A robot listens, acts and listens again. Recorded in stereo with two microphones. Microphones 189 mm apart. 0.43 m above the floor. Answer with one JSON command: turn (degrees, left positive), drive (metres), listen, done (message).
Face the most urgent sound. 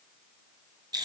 {"listen": true}
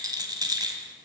{"listen": true}
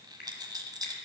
{"done": "I can't make out anything urgent to turn to."}